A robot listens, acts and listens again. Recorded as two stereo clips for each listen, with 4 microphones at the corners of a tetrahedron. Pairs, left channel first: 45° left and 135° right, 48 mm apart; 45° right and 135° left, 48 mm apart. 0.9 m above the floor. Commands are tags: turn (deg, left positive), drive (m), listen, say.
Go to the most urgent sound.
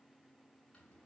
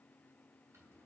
<listen/>
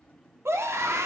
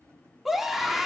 <turn deg="-140"/>
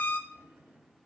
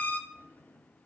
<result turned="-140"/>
<drive m="1.0"/>
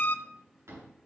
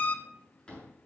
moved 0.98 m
<drive m="1.0"/>
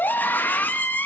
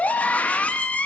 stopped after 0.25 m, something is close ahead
<turn deg="10"/>
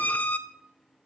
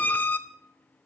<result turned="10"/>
<say>Arrived at the scream, straight ahead.</say>